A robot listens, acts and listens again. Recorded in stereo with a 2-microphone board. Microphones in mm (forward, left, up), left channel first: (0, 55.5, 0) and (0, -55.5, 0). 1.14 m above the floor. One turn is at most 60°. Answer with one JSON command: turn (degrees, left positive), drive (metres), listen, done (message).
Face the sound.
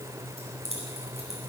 {"turn": -60}
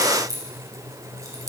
{"turn": -30}
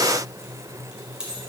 {"turn": -10}
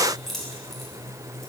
{"done": "Found it: keys jangling, straight ahead, 2 to 4 m away."}